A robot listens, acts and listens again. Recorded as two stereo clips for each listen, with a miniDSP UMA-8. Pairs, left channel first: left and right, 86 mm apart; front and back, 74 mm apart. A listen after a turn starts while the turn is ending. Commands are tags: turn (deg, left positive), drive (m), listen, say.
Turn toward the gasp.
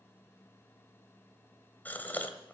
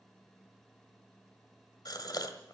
<turn deg="20"/>
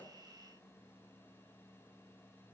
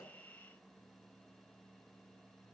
<say>Facing where the gasp came from. I can't hear it now.</say>